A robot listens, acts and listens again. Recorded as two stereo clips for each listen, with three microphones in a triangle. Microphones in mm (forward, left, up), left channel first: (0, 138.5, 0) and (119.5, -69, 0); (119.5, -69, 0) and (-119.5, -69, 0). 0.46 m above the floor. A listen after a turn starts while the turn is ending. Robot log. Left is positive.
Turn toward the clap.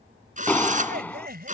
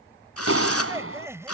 note: The clap: 160° right.
cmd yaw -160
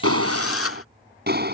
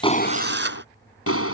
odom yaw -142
note: The clap is now 15° right.
cmd yaw -15
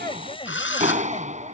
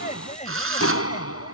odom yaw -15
end: Found it: a clap, straight ahead.